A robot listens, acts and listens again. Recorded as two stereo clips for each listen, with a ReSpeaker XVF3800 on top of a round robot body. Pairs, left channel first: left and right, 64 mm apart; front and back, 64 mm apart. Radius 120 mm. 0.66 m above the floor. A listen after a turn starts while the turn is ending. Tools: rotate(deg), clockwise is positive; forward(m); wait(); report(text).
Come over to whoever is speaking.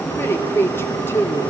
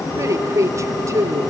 rotate(-140)
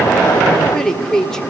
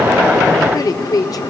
rotate(-10)
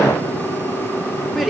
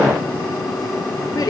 forward(1.0)
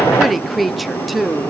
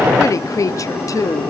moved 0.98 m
forward(1.0)
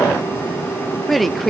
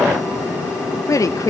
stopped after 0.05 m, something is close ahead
report("I am next to the woman speaking.")